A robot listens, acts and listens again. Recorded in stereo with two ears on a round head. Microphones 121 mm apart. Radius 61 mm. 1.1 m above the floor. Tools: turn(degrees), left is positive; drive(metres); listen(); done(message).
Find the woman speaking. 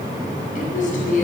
turn(degrees=65)
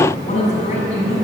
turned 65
turn(degrees=50)
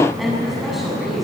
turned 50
done("Facing the woman speaking, over 4 m away.")